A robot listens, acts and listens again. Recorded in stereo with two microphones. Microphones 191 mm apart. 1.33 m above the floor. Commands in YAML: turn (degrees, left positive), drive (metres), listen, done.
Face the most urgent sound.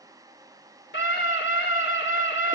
turn: 90
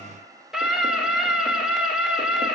done: "Found it: a scream, straight ahead."